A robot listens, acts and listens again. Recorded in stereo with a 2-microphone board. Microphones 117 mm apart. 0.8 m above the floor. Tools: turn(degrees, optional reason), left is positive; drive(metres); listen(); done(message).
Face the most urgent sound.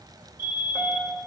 turn(degrees=40, reason="The fire alarm: about 40° left or 140° left.")
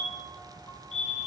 turn(degrees=100, reason="So it is at 100° left.")
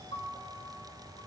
listen()
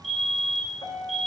done("Facing the fire alarm.")